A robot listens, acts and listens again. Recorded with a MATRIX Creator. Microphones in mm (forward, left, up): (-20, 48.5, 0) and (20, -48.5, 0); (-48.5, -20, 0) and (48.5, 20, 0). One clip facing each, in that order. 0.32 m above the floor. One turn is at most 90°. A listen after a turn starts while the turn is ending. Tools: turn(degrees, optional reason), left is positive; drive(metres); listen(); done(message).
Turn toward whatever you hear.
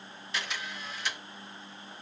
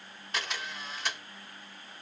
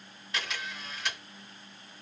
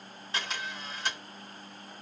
turn(degrees=-30, reason="The camera shutter: 30° right.")
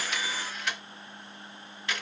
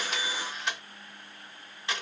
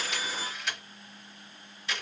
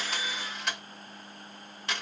done("Found it: a camera shutter, straight ahead.")